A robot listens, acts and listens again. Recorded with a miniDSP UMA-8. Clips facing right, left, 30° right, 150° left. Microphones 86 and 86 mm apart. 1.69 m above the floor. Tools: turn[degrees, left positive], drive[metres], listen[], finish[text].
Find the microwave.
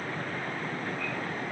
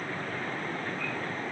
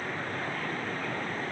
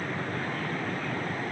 Action: listen[]
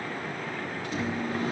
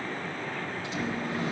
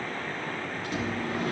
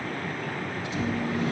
Thought: The microwave: 55° right.
Action: turn[-55]
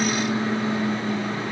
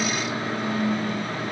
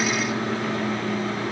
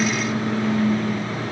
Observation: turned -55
Thought: The microwave is now 25° right.
Action: turn[-25]
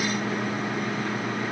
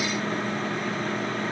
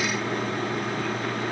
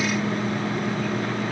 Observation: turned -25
Thought: The microwave is now 10° right.
Action: turn[-10]
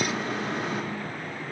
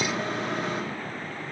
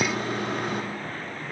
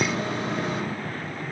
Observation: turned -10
Action: finish[Found it: a microwave, straight ahead, 2 to 4 m away.]